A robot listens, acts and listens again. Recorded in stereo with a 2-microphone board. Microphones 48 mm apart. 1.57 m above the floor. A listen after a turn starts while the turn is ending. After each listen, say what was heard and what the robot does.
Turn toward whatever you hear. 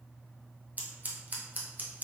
The scissors: about 35° right or 145° right. Turn 35° right.
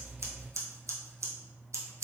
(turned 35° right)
So it is at 110° right. Turn 110° right.
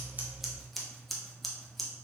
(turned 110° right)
Found it: scissors, straight ahead.